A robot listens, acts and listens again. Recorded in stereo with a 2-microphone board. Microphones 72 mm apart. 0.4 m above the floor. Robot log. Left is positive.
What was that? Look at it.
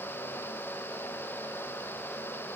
cmd idle
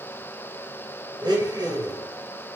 cmd yaw -90
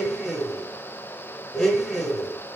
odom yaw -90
note: So it is at 10° left.
cmd yaw +10
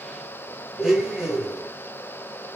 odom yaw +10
end: Found it: a blender, straight ahead.